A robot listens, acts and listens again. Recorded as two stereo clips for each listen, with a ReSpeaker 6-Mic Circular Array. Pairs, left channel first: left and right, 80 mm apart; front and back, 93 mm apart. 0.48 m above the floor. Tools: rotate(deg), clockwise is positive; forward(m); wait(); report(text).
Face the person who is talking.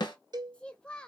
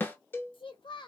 rotate(-15)
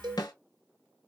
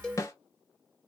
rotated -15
wait()
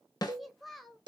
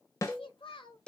report("Found it: a child speaking, straight ahead.")